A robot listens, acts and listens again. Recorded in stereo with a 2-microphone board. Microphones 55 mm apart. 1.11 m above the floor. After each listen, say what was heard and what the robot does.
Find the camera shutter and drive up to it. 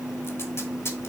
Keep listening.
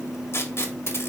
Keep listening.
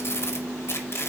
I can't make out a camera shutter to turn to.